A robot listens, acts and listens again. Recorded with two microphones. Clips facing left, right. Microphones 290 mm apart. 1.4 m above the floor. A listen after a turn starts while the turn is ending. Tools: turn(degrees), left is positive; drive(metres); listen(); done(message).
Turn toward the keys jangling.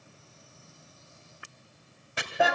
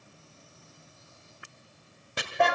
listen()
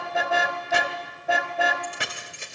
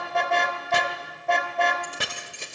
turn(degrees=-45)
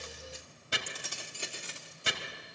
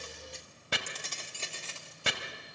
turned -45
turn(degrees=20)
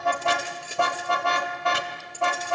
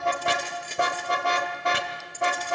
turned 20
turn(degrees=10)
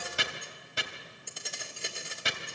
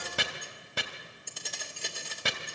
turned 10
done("Facing the keys jangling.")